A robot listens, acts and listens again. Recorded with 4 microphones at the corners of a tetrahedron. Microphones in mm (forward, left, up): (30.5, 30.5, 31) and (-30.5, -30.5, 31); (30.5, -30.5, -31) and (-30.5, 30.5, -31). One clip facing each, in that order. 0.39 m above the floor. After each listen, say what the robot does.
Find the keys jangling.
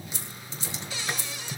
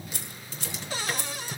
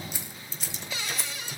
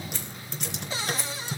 Turn 135° right.
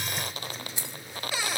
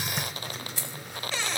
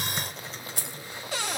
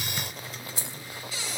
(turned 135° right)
Turn 30° right.
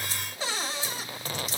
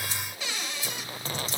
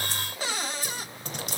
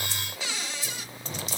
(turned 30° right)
Keep listening.
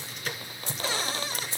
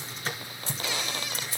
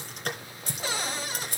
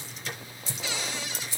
Turn 15° right.
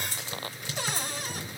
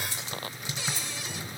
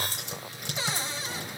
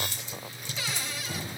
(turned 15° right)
Keep listening.
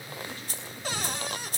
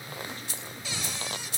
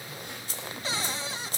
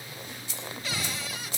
Found it: keys jangling, straight ahead, 2 to 4 m away.